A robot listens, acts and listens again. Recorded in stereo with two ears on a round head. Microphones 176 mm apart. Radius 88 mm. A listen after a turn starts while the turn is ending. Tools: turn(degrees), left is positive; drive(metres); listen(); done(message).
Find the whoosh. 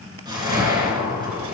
turn(degrees=-20)
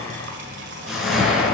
done("Facing the whoosh.")